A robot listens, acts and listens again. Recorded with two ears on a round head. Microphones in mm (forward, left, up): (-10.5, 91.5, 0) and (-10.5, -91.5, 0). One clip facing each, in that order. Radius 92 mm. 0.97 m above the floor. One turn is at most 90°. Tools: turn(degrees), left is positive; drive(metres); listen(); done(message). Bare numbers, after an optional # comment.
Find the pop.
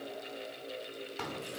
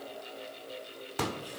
# The pop: about 70° right or 110° right.
turn(-70)
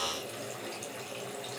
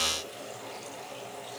listen()
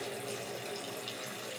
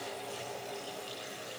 done("I heard a pop, but can't make it out now. It was about straight ahead or 40° right.")